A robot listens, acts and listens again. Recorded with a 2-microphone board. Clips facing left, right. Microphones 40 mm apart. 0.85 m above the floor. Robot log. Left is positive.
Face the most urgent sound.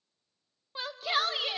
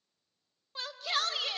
cmd yaw +30
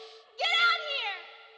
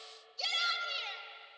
note: So it is at 135° left.
cmd yaw +135
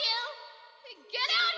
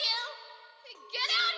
end: Facing the shout.